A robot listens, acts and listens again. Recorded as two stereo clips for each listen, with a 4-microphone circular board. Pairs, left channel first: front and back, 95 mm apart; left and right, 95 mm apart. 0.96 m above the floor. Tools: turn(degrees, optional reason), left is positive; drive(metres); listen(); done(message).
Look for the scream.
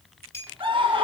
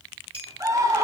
turn(degrees=-145, reason="The scream: 145° right.")
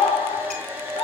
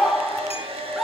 done("Found it: a scream, straight ahead, 1 to 2 m away.")